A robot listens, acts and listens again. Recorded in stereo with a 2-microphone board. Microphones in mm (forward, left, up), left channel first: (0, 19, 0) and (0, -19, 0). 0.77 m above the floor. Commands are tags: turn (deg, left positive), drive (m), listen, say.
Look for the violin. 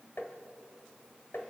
<listen/>
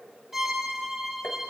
<turn deg="-30"/>
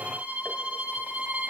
<turn deg="-145"/>
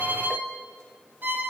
<turn deg="-60"/>
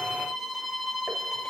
<say>Found it: a violin, straight ahead, 1 to 2 m away.</say>